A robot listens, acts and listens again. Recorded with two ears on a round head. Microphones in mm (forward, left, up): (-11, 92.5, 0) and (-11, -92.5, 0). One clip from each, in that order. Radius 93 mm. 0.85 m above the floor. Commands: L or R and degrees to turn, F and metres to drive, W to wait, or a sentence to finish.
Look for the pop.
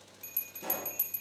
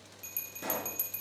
R55
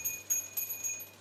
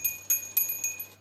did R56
W
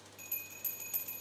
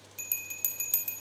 I heard a pop, but can't make it out now. It was about straight ahead or 70° right.